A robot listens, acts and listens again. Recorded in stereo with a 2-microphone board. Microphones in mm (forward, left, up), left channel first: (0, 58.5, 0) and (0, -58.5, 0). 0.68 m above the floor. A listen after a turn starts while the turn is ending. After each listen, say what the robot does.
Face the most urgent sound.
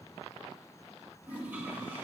Keep listening.
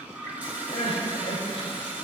Turn 55° left.
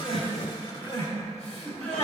Turn 70° left.
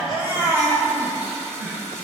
Turn 35° left.
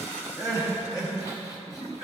Turn 35° left.
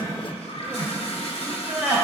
Turn 10° right.
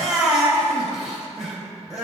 Found it: crying, straight ahead, 2 to 4 m away.